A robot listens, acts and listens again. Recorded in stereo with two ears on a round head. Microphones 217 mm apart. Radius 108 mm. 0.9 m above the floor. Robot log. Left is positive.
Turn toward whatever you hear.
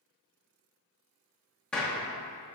cmd yaw +30
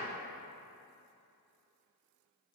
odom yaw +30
cmd idle
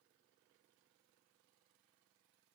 end: I heard a gunshot, but can't make it out now. It was about 25° right or 145° left.